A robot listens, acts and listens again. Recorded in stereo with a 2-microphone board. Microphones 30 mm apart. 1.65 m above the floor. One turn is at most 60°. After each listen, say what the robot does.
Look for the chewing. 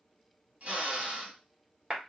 Keep listening.
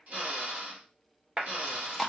Turn 30° left.
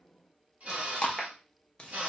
Turn 60° left.
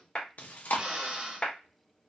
Turn 60° left.
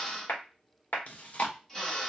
Turn 50° left.
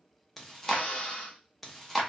Found it: chewing, straight ahead, under 1 m away.